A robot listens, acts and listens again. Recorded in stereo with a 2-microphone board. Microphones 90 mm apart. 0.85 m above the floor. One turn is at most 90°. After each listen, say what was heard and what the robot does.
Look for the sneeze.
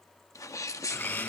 The sneeze: about 35° left or 145° left. Turn 35° left.
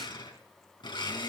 Keep listening.
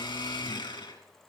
I heard a sneeze, but can't make it out now. It was about straight ahead or 110° left.